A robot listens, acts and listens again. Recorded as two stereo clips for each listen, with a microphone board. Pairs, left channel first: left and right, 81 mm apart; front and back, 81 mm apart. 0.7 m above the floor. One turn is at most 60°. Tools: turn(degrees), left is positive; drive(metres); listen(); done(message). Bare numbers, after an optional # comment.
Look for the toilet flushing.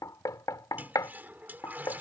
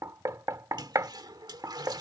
# The toilet flushing: 155° right.
turn(-60)
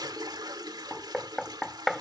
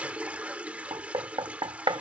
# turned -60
# The toilet flushing is now 105° right.
turn(-60)
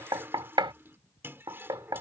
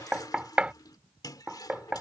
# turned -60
# The toilet flushing is now 30° right.
turn(-30)
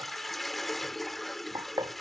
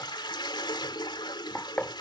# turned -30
done("Found it: a toilet flushing, straight ahead.")